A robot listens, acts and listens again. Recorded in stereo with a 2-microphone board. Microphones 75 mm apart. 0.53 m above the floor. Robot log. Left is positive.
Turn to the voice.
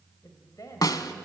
note: The woman speaking: about 50° left or 130° left.
cmd yaw +50
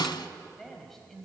end: Facing the woman speaking, 2 to 4 m away.